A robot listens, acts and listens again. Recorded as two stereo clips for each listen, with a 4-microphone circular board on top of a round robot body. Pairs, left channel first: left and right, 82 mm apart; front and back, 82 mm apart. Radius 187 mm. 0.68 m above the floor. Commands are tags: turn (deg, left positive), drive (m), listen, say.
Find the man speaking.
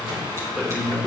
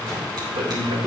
<turn deg="-175"/>
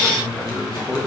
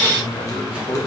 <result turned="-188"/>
<turn deg="30"/>
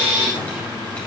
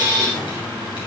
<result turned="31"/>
<listen/>
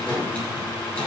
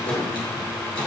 <listen/>
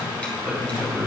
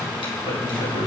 <say>Facing the man speaking.</say>